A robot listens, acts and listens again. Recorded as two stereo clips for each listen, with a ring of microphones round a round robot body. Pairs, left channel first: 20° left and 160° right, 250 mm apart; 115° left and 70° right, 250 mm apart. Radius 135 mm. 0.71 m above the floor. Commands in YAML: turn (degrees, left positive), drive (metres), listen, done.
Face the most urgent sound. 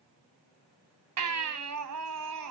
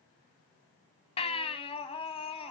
turn: 180
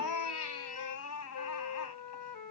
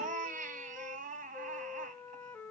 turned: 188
done: "Found it: a baby crying, straight ahead."